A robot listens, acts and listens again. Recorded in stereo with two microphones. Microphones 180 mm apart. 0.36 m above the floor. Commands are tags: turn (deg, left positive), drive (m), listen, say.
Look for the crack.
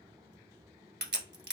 <turn deg="-75"/>
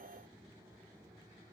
<listen/>
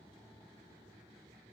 <say>I heard a crack, but can't make it out now. It was about straight ahead or 30° right.</say>